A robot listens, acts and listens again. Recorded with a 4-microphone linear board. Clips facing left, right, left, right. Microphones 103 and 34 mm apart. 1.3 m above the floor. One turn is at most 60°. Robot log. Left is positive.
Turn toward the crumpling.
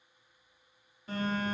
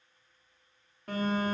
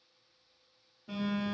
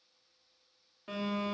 cmd idle
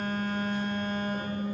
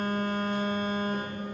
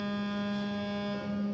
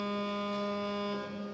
cmd idle
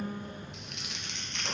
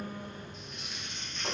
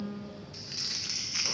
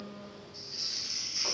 cmd yaw +60
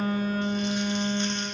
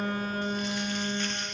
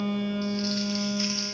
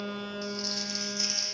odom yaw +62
note: Nothing new. It was at 30° left.
cmd yaw +30
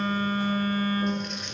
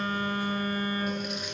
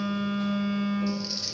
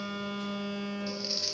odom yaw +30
cmd idle
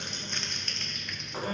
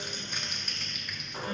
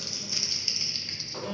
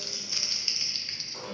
end: Facing the crumpling.